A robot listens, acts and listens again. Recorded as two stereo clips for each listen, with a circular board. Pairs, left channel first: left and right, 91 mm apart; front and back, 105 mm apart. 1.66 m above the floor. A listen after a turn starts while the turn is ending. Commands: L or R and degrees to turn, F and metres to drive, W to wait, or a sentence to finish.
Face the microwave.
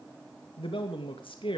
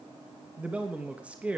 W
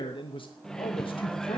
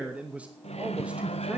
Found it: a microwave, straight ahead, 1 to 2 m away.